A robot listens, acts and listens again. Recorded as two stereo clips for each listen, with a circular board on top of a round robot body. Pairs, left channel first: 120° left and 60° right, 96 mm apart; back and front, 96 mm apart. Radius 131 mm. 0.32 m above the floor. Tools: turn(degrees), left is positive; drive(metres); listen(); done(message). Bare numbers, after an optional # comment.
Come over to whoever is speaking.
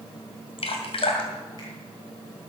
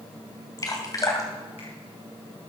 listen()
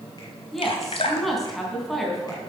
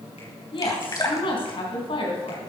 # The woman speaking: 150° right.
turn(-150)
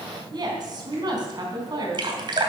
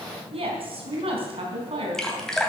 # The woman speaking is now 15° right.
turn(-15)
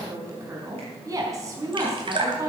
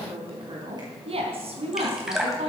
drive(1.0)
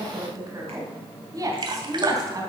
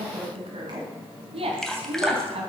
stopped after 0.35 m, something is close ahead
done("Blocked. The woman speaking is further on, straight ahead.")